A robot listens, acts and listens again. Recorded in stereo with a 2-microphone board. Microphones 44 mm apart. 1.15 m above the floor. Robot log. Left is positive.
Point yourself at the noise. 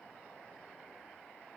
cmd idle
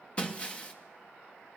note: The breaking glass: about 30° left or 150° left.
cmd yaw +30
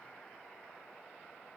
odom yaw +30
cmd idle
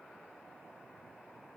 end: I heard breaking glass, but can't make it out now. It was about straight ahead or 120° left.